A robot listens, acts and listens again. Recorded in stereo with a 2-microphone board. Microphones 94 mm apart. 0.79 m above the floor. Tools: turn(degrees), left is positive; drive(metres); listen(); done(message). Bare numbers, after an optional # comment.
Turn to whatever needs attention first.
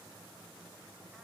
listen()
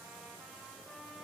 listen()
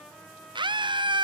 # The scream: about 55° right or 125° right.
turn(-55)
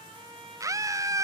# So it is at 45° right.
turn(-45)
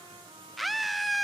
done("Facing the scream, under 1 m away.")